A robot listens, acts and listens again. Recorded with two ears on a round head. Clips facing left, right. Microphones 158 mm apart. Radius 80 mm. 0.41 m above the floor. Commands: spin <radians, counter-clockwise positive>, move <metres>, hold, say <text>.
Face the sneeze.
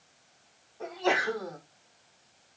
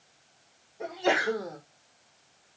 spin -0.52
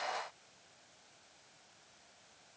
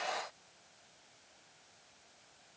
hold
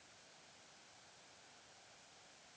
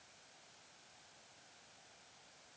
say I heard a sneeze, but can't make it out now. It was about 15° left or 135° right.